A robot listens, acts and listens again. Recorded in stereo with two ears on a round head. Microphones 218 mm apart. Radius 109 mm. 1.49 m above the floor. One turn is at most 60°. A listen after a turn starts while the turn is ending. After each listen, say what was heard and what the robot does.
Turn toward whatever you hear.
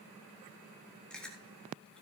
Turn 30° left.
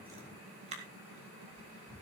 So it is at 30° right. Turn 30° right.
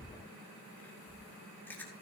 Found it: chewing, straight ahead.